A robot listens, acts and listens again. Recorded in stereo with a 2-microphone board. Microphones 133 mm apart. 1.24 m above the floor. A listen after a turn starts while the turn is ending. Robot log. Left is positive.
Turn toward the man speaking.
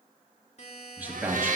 cmd yaw -30
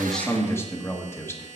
note: So it is at 20° left.
cmd yaw +20
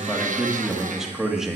end: Facing the man speaking.